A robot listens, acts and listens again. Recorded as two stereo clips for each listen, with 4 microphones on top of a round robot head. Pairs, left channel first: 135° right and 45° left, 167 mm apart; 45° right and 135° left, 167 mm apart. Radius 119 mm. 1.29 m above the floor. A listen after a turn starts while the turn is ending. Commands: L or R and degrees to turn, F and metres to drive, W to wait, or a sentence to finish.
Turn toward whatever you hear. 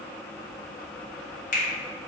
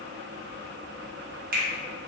L175
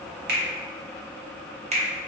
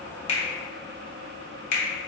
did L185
R10
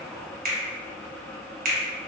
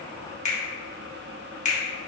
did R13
Facing the finger snap, 1 to 2 m away.